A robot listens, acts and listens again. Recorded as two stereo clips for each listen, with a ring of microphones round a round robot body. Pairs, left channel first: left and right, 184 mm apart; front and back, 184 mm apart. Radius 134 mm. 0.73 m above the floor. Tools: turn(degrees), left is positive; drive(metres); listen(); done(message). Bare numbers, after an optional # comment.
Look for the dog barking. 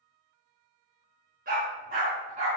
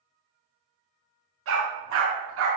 # The dog barking: 155° right.
turn(-155)
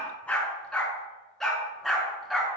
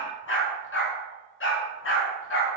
done("Found it: a dog barking, straight ahead.")